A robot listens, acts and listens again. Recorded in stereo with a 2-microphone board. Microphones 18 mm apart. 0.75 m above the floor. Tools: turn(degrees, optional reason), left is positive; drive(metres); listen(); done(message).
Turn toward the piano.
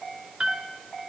turn(degrees=-70, reason="The piano: about 70° right or 110° right.")
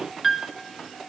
turn(degrees=-10, reason="So it is at 10° right.")
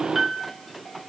done("Facing the piano, 1 to 2 m away.")